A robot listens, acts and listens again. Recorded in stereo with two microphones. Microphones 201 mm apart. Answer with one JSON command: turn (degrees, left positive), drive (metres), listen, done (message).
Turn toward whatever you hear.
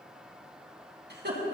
{"turn": -55}
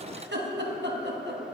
{"turn": -65}
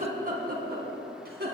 {"turn": -55}
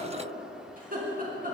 {"turn": -45}
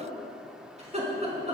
{"turn": -35}
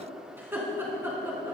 {"turn": -10}
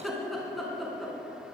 {"done": "Found it: laughter, straight ahead."}